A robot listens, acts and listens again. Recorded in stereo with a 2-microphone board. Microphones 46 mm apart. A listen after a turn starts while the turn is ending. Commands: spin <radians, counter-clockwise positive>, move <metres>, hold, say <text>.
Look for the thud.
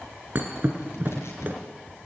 spin -0.79
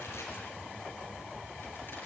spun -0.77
hold
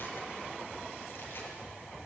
say I heard a thud, but can't make it out now. It was about straight ahead or 90° right.